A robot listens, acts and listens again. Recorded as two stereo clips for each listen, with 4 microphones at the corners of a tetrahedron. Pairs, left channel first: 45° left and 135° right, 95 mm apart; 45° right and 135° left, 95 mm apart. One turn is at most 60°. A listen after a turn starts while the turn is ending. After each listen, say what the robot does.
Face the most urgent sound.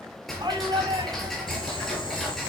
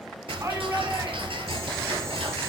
Turn 60° right.
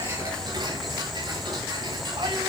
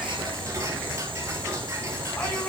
Turn 60° right.
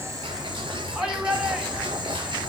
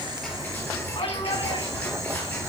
Turn 55° right.
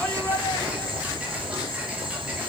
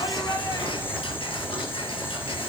Keep listening.
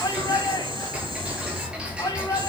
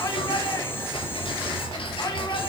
Facing the shout.